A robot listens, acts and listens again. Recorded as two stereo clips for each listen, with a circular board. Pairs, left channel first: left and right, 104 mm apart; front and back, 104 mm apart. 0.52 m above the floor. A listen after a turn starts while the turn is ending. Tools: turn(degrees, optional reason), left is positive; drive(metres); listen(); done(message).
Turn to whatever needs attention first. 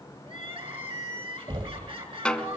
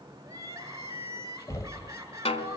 turn(degrees=-120, reason="The crying: 120° right.")
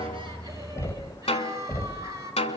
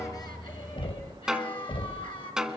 turn(degrees=-35, reason="The crying is now 35° right.")
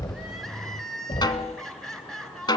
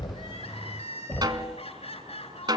done("Facing the crying, over 4 m away.")